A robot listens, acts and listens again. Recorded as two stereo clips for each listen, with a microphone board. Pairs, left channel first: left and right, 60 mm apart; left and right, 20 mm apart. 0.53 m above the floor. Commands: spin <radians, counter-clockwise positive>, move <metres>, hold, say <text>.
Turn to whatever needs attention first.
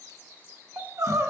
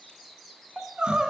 spin -1.05
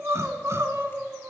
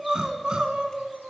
spin -0.87
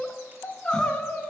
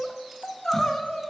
spin 0.26
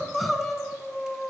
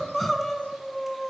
say Found it: crying, straight ahead, under 1 m away.